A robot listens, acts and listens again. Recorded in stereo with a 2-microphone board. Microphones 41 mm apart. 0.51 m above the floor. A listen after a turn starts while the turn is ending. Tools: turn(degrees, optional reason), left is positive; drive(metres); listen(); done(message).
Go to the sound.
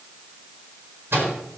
turn(degrees=-75, reason="The microwave: about 75° right or 105° right.")
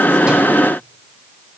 listen()
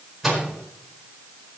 drive(metres=1.0)
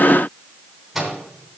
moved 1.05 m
drive(metres=1.0)
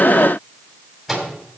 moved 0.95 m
drive(metres=1.0)
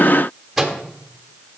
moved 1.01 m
drive(metres=1.0)
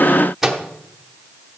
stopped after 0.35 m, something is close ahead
turn(degrees=-10, reason="The microwave is now 10° right.")
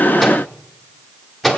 done("I am next to the microwave.")